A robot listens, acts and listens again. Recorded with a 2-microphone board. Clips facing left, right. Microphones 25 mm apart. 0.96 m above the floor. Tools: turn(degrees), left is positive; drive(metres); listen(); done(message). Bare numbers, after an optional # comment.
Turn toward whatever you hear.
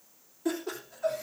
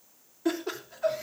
# The laughter: about 30° right or 150° right.
turn(-30)
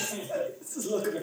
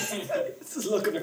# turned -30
# So it is at 120° right.
turn(-120)
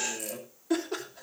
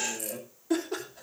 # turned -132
# The laughter is now 10° left.
turn(10)
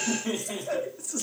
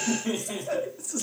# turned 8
done("Found it: laughter, straight ahead, 2 to 4 m away.")